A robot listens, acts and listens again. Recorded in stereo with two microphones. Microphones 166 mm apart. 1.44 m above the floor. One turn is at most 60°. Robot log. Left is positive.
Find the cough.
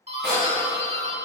cmd yaw +30
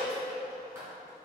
cmd idle
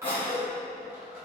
note: So it is at 145° left.
cmd yaw +60
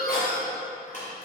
note: The cough is now 75° left.
cmd yaw +60
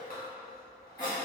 note: The cough is now 25° left.
cmd yaw +25
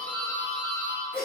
end: Facing the cough.